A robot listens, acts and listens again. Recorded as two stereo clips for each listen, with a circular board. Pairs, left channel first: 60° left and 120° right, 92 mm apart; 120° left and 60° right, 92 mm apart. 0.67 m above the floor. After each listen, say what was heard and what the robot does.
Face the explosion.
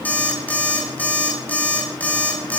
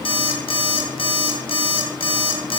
Keep listening.
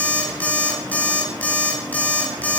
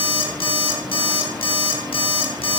Keep listening.
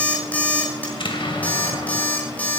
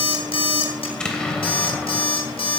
The explosion: 40° left. Turn 40° left.
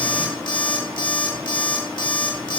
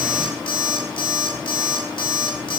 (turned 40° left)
I heard an explosion from this way, but can't make it out now.